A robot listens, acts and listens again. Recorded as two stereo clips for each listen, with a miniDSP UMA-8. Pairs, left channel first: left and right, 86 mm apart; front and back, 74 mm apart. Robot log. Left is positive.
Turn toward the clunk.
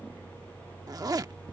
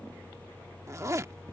cmd idle
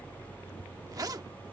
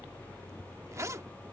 cmd idle
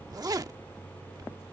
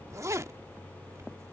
end: I can't make out a clunk, only a zipper.